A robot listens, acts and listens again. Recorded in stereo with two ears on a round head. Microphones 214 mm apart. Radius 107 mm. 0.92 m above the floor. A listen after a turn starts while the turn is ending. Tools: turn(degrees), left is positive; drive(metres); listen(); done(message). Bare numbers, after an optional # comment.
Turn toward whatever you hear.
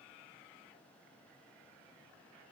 listen()
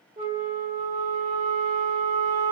# The flute: about 25° right or 155° right.
turn(-25)
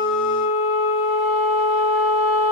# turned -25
done("Found it: a flute, straight ahead.")